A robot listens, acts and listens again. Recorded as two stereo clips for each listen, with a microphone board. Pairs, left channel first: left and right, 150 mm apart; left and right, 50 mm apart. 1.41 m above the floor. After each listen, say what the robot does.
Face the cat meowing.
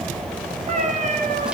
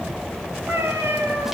Turn 60° right.
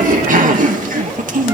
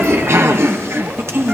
Keep listening.
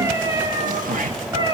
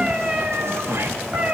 Turn 30° right.
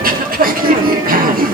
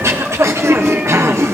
Keep listening.
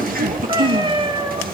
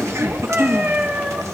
Turn 35° right.
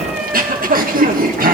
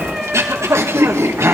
Facing the cat meowing, 2 to 4 m away.